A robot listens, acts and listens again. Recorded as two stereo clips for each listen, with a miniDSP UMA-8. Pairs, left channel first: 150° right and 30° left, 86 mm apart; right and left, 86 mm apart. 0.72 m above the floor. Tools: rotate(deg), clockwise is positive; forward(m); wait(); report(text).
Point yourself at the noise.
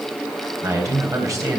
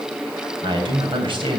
rotate(-80)
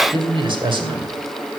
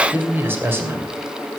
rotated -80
rotate(-30)
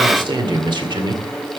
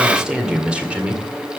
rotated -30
rotate(-15)
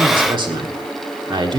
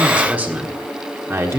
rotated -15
rotate(-35)
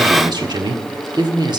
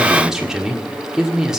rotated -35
report("Found it: a man speaking, straight ahead.")